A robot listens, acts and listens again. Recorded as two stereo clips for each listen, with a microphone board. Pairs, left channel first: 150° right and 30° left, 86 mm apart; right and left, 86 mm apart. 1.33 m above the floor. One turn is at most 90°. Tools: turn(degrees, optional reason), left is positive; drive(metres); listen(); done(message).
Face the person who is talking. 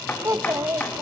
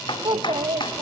turn(degrees=80, reason="The child speaking: 80° left.")
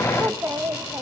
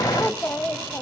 turn(degrees=-30, reason="The child speaking is now 30° right.")
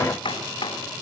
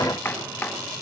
listen()
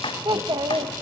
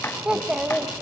turn(degrees=10, reason="The child speaking is now 10° left.")
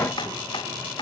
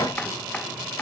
listen()
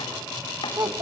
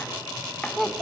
done("Facing the child speaking, 1 to 2 m away.")